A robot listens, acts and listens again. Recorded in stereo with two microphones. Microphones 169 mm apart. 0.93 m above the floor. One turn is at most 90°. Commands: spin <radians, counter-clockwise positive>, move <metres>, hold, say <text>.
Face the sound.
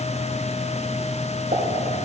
spin -0.79
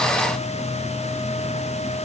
hold
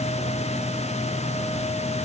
say I heard a pop, but can't make it out now. It was about straight ahead or 90° right.